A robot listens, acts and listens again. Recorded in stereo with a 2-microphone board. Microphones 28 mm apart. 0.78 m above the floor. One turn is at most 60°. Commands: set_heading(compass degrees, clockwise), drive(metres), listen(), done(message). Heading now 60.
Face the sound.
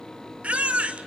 set_heading(115)
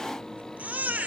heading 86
set_heading(146)
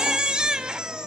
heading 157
set_heading(187)
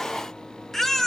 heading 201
set_heading(186)
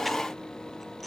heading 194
listen()
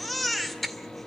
done("Found it: a baby crying, straight ahead.")